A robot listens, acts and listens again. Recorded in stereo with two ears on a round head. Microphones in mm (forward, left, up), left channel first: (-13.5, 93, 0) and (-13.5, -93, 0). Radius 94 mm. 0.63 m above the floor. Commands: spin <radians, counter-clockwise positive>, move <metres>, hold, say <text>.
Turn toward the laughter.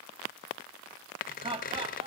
spin -0.44
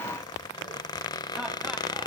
hold
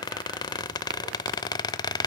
hold
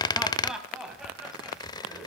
say Facing the laughter.